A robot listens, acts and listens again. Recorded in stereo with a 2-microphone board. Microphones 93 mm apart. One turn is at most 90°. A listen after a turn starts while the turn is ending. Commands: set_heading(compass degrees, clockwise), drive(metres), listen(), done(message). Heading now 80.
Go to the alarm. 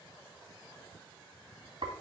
listen()
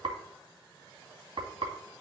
listen()
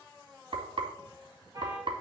set_heading(120)
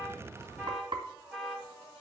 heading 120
drive(1.0)
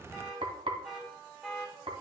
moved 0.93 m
drive(1.0)
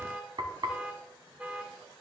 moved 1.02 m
set_heading(140)
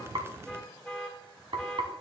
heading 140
drive(1.0)
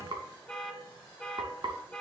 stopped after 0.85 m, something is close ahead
done("I am next to the alarm.")